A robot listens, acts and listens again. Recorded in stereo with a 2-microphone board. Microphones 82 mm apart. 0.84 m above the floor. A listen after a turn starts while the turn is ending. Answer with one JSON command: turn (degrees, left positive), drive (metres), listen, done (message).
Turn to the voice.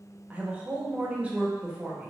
{"turn": -15}
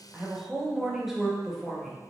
{"done": "Facing the woman speaking, under 1 m away."}